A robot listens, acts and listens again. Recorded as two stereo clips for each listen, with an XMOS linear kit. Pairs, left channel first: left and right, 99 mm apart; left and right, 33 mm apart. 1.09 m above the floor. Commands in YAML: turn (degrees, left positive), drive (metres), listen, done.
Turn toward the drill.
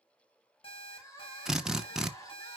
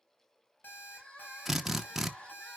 turn: -30
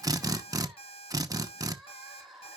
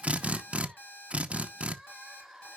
turn: -140
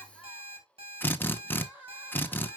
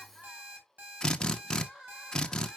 turn: 20
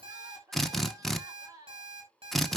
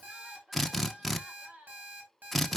done: "Found it: a drill, straight ahead."